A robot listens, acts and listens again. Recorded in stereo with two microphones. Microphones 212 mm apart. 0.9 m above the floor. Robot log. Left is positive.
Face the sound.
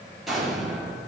cmd yaw +30
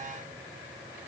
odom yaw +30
cmd idle
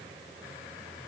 end: I heard an explosion, but can't make it out now. It was about 30° right or 150° left.